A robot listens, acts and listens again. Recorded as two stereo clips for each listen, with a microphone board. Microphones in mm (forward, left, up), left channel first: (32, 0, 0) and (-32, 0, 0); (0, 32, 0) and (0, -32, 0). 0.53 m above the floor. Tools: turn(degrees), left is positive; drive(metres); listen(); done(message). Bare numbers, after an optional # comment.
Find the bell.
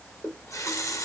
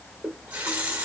listen()
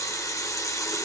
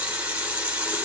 listen()
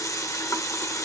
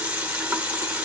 done("I can't make out a bell, only a running tap.")